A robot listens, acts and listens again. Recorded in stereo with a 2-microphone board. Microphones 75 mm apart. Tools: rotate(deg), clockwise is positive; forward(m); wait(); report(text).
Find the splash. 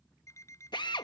wait()
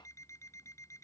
wait()
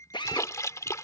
rotate(-45)
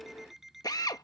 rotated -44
wait()
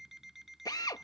report("I heard a splash, but can't make it out now. It was about straight ahead or 90° left.")